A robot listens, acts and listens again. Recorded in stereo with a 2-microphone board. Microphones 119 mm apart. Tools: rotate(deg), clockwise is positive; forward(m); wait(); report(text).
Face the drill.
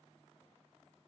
wait()
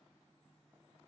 wait()
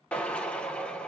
rotate(-30)
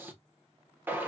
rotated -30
rotate(20)
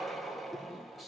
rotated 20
report("Found it: a drill, straight ahead, under 1 m away.")